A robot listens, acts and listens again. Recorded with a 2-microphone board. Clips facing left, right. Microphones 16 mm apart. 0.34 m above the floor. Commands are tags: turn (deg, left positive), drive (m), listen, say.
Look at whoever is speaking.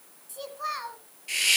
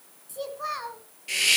<turn deg="30"/>
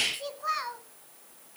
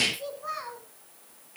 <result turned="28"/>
<turn deg="145"/>
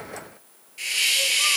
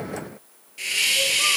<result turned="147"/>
<listen/>
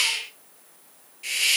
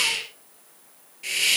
<listen/>
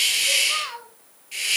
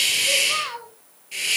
<say>Facing the child speaking, 1 to 2 m away.</say>